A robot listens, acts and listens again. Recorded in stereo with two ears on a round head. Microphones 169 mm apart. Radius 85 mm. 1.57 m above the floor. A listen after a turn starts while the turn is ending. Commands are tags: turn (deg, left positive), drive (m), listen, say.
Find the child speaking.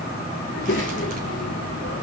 <turn deg="55"/>
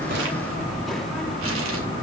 <say>Found it: a child speaking, straight ahead.</say>